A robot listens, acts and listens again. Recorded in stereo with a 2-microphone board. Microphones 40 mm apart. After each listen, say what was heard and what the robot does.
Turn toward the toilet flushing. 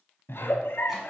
Keep listening.
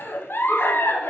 Keep listening.
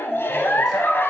I can't make out a toilet flushing, only a giggle.